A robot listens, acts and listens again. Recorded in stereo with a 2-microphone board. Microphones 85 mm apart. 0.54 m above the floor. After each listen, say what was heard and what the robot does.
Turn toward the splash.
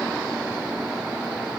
Keep listening.
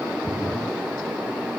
The splash: about 60° right or 120° right. Turn 60° right.
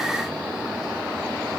Keep listening.
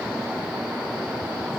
I heard a splash, but can't make it out now. It was about straight ahead or 60° right.